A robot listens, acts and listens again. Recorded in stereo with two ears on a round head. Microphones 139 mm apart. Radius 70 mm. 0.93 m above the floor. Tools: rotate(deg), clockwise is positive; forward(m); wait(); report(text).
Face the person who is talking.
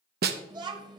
rotate(25)
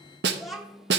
report("Found it: a child speaking, straight ahead.")